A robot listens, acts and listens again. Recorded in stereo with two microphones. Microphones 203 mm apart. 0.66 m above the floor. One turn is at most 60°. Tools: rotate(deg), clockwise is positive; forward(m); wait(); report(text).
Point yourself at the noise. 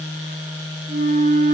rotate(55)
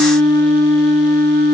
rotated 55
rotate(60)
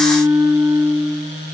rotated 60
rotate(20)
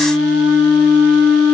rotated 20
report("Found it: a flute, straight ahead.")